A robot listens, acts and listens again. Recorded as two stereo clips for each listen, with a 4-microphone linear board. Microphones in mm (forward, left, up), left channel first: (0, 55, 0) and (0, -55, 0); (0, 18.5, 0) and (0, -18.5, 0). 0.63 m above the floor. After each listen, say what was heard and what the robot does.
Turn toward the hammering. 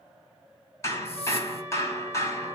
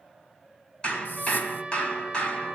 The hammering: about 30° left or 150° left. Turn 30° left.
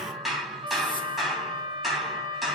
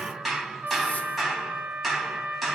Found it: hammering, straight ahead.